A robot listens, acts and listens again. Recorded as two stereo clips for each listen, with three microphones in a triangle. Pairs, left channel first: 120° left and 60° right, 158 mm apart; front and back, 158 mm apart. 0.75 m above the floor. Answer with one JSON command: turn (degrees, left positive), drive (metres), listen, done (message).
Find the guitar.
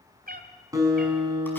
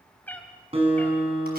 {"turn": -130}
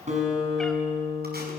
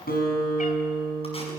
{"turn": -15}
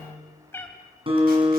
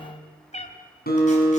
{"done": "Facing the guitar, over 4 m away."}